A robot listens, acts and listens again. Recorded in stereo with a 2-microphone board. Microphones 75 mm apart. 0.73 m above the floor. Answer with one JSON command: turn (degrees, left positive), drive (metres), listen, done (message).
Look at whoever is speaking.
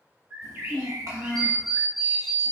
{"turn": -55}
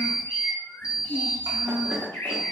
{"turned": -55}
{"turn": -70}
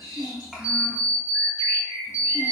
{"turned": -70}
{"done": "Found it: a child speaking, straight ahead."}